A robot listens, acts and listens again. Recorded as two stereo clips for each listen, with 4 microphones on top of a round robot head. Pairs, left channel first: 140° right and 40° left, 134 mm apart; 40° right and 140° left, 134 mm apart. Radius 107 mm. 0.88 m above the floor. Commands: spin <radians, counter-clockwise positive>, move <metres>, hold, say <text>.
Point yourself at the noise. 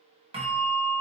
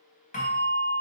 say Facing the bell.